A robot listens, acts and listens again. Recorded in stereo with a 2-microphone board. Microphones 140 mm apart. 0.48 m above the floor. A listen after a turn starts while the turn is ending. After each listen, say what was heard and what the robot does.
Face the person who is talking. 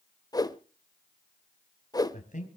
The man speaking: about 65° left or 115° left. Turn 65° left.
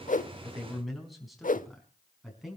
Found it: a man speaking, straight ahead.